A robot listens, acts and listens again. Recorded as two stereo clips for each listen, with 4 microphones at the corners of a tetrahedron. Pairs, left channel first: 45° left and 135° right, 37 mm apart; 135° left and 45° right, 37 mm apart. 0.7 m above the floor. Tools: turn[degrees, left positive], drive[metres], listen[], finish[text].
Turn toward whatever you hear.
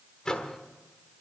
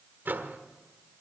Thought: The microwave: 25° right.
Action: turn[-25]
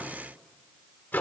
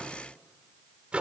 Thought: The microwave is now 15° left.
Action: turn[15]
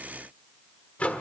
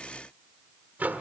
Action: finish[Found it: a microwave, straight ahead.]